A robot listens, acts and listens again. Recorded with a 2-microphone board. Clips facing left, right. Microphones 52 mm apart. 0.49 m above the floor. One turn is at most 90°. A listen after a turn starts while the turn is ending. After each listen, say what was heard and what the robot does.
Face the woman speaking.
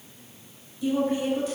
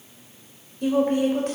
The woman speaking: about 60° right or 120° right. Turn 60° right.
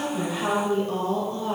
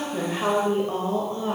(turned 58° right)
So it is at 35° right. Turn 35° right.
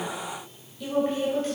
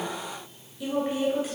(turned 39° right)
The woman speaking is now 10° right. Turn 10° right.
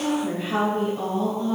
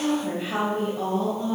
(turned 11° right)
The woman speaking is now 10° right. Turn 10° right.
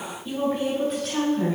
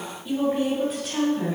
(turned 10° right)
Found it: a woman speaking, straight ahead, 2 to 4 m away.